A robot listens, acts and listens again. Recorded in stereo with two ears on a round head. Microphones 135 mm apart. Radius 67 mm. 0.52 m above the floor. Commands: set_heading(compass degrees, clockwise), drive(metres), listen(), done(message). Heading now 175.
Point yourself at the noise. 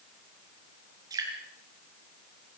set_heading(200)
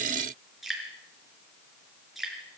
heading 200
done("Facing the dripping.")